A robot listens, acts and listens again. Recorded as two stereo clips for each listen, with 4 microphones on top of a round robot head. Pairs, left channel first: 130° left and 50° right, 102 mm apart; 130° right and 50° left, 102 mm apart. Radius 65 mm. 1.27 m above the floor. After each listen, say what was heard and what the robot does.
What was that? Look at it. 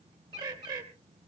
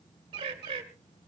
Found it: a bird, straight ahead.